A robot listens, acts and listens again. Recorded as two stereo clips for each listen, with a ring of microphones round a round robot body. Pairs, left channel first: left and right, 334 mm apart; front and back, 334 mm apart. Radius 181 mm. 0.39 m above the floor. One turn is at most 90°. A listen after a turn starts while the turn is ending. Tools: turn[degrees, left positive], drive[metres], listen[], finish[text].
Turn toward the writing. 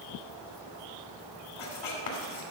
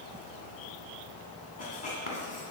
Thought: The writing: 70° left.
Action: turn[70]
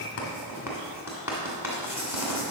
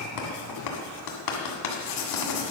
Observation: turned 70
Action: finish[Facing the writing.]